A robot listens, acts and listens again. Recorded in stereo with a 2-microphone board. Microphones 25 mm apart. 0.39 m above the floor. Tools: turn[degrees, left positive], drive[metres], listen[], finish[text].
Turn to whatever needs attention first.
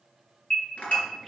Thought: The alarm: about 45° left or 135° left.
Action: turn[45]
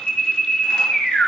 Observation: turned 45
Thought: So it is at 95° left.
Action: turn[95]
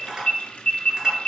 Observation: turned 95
Thought: The alarm is now 45° left.
Action: turn[45]
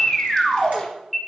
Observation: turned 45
Action: finish[Facing the alarm, 2 to 4 m away.]